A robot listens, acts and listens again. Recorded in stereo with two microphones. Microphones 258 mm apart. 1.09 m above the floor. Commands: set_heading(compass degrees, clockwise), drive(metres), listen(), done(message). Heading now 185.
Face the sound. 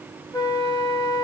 set_heading(170)
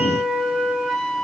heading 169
done("Found it: a flute, straight ahead, 1 to 2 m away.")